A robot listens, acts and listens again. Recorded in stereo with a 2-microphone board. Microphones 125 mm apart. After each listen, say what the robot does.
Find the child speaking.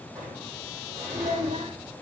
Turn 60° right.
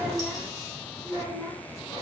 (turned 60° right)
Turn 15° left.
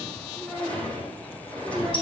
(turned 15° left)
Facing the child speaking.